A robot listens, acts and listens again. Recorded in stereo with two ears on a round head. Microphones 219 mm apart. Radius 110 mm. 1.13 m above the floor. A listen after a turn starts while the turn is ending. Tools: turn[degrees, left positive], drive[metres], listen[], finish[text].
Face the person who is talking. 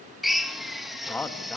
Action: turn[30]
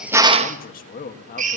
Thought: So it is at 140° left.
Action: turn[140]
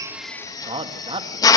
Thought: The man speaking is now 20° right.
Action: turn[-20]
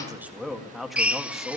Action: finish[Facing the man speaking.]